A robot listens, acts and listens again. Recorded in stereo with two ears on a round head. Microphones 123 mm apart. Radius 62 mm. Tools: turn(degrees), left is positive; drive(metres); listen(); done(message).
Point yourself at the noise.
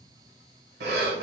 turn(degrees=-90)
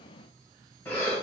turn(degrees=15)
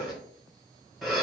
done("Facing the breathing.")